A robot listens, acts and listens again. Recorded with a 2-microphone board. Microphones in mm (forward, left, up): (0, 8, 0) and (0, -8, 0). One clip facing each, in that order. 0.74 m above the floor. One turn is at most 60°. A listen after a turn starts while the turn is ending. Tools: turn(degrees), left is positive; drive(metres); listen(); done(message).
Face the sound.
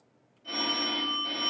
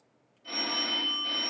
turn(degrees=-30)
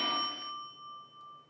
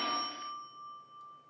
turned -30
turn(degrees=25)
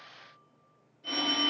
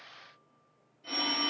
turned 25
turn(degrees=20)
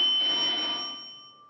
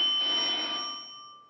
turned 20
done("Facing the phone ringing, 1 to 2 m away.")